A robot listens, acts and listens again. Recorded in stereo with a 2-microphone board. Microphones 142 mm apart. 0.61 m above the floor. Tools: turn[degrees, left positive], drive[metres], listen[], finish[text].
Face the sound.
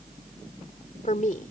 Thought: The woman speaking: about 65° left or 115° left.
Action: turn[65]
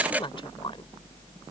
Thought: So it is at 40° left.
Action: turn[40]
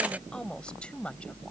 Thought: The woman speaking is now 10° left.
Action: turn[10]
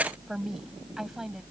Action: finish[Found it: a woman speaking, straight ahead.]